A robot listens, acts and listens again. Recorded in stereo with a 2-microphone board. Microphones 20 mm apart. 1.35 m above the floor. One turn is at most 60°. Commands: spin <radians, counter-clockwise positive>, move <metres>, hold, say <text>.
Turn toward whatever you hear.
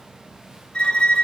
spin 0.87
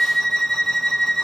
spin 0.26
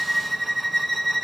say Found it: a violin, straight ahead, under 1 m away.